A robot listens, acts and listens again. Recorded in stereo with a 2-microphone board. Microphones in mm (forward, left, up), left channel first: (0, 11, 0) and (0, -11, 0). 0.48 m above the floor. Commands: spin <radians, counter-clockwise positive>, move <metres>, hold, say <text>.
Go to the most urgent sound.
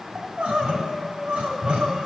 spin -1.57
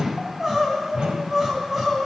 move 1.0
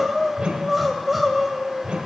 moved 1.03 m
move 1.0
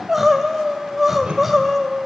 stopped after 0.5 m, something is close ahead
spin -0.17
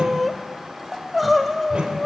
say I am next to the crying.